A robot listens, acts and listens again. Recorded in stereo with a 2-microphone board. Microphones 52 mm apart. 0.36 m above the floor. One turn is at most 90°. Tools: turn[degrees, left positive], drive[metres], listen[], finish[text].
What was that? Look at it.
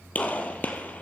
Thought: The gunshot: about 30° left or 150° left.
Action: turn[30]
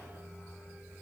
Action: listen[]
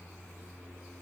Action: finish[I heard a gunshot, but can't make it out now. It was about straight ahead or 120° left.]